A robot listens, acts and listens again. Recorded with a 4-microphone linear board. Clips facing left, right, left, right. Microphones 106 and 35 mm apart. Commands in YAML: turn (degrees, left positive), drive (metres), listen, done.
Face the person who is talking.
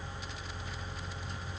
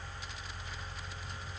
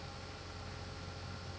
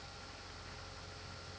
listen: true
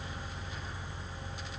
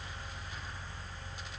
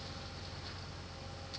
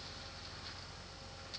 listen: true
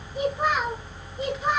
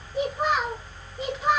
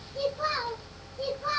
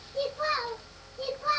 turn: -20
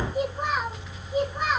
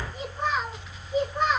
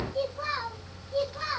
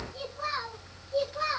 turn: 10
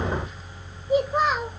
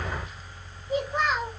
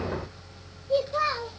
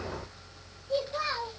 done: "Found it: a child speaking, straight ahead, 2 to 4 m away."